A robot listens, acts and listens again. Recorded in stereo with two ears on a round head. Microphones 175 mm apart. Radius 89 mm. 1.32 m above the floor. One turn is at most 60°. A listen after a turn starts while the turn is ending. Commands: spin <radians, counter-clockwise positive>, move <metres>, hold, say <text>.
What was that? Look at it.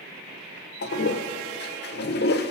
spin 1.05
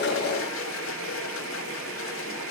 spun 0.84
spin 1.05
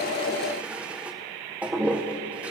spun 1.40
say Found it: a toilet flushing, straight ahead.